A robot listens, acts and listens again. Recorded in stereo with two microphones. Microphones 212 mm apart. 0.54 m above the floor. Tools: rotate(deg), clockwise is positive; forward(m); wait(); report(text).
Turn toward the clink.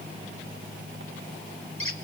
wait()
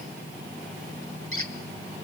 wait()
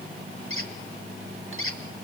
report("I can't make out a clink, only a squeak.")